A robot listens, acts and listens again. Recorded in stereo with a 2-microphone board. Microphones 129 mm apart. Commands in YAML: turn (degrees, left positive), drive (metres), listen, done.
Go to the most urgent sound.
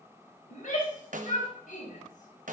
turn: 75
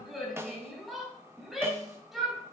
drive: 1.0
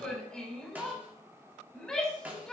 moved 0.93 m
drive: 1.0
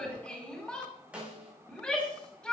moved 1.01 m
drive: 1.0
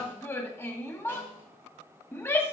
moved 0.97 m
turn: 15
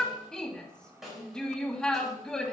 drive: 1.0
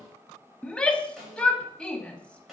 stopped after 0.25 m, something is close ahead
turn: 10
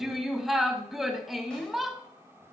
done: "I am next to the shout."